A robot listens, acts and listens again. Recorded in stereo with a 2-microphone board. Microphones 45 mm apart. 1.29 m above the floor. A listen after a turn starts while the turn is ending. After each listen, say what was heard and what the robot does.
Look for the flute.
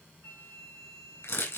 The flute: about 65° left or 115° left. Turn 65° left.
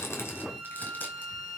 Facing the flute, 2 to 4 m away.